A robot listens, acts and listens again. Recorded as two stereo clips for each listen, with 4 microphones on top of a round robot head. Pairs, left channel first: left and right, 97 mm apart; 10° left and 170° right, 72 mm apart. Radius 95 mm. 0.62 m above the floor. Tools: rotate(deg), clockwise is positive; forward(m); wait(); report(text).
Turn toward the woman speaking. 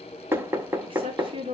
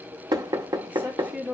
rotate(105)
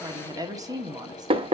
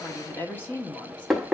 rotate(55)
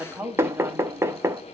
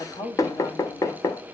rotate(20)
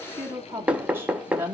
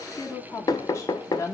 rotate(25)
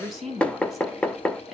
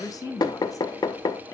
report("Found it: a woman speaking, straight ahead.")